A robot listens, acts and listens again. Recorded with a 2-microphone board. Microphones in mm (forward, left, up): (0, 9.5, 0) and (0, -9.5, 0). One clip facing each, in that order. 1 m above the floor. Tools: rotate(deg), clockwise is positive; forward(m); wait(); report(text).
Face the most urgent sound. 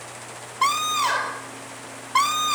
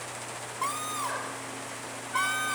rotate(-70)
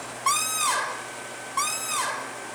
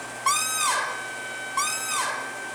report("Found it: a scream, straight ahead.")